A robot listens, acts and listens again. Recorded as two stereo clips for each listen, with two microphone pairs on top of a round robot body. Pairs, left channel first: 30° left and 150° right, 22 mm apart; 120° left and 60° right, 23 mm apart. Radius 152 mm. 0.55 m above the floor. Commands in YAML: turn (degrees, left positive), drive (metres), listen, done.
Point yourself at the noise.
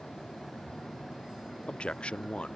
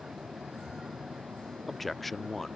turn: 40
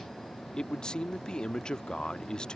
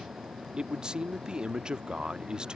done: "Facing the man speaking."